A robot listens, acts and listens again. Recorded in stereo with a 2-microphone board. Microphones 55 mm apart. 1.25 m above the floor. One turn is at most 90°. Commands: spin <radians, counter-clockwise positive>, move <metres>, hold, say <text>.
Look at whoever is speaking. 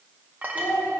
spin 1.05
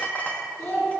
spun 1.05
spin 1.05
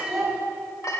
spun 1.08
say Facing the child speaking, 2 to 4 m away.